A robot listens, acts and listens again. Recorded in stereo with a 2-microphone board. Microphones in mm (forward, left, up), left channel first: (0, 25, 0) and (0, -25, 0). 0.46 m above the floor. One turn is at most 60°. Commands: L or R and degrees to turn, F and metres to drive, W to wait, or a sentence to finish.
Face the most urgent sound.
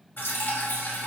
W
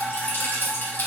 W
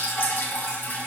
I can't make out anything urgent, only dripping.